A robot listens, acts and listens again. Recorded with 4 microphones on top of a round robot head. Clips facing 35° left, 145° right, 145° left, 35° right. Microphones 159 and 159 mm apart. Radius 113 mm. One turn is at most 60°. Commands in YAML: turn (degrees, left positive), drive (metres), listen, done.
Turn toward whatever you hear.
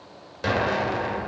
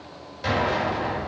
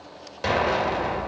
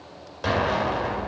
turn: 60
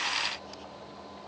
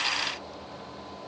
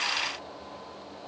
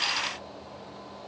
done: "I heard an explosion from this way, but can't make it out now."